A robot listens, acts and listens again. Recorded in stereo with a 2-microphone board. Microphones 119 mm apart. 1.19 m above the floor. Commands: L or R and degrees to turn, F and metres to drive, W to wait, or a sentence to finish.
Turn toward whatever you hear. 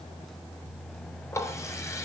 L25
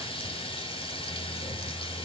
L130
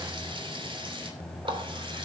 R45
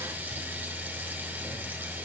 R15
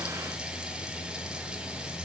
W
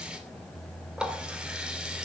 Facing the running tap.